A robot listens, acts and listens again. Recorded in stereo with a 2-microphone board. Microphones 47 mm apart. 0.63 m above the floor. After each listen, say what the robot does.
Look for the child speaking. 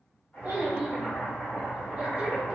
Turn 30° right.
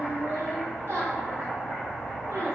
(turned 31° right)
Turn 115° right.
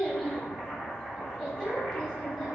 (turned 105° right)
Turn 10° right.
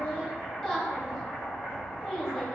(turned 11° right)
Found it: a child speaking, straight ahead, 1 to 2 m away.